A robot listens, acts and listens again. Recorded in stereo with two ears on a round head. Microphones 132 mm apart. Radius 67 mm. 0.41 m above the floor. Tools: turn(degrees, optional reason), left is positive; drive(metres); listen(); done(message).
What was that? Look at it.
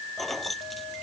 turn(degrees=30)
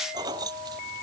turn(degrees=-25, reason="So it is at 25° right.")
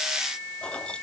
listen()
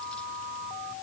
listen()
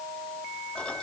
done("Facing where the keys jangling came from. I can't hear it now.")